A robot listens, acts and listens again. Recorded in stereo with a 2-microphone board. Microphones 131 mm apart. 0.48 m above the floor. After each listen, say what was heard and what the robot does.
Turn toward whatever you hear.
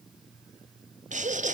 The laughter: about 70° right or 110° right. Turn 70° right.
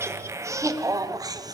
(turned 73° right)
So it is at 30° right. Turn 30° right.
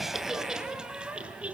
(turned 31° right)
The laughter is now 10° right. Turn 10° right.
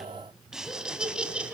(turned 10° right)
Facing the laughter, 2 to 4 m away.